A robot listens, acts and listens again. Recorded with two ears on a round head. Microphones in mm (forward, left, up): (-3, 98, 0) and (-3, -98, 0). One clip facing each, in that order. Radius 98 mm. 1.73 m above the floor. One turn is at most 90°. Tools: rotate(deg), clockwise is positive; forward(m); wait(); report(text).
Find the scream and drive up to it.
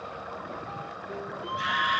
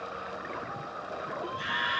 rotate(-55)
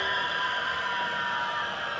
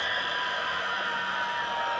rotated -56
forward(1.0)
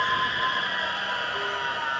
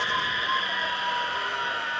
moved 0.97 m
forward(1.0)
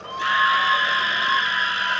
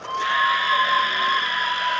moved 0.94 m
rotate(-10)
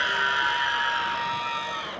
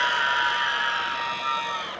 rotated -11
forward(1.0)
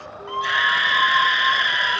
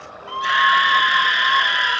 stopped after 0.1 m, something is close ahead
report("I am next to the scream.")